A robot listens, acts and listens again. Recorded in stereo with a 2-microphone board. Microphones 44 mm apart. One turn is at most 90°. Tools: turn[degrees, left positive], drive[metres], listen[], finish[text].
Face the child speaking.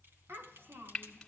Thought: The child speaking: about 65° right or 115° right.
Action: turn[-65]
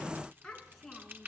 Thought: So it is at 10° left.
Action: turn[10]
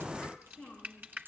Action: finish[Found it: a child speaking, straight ahead.]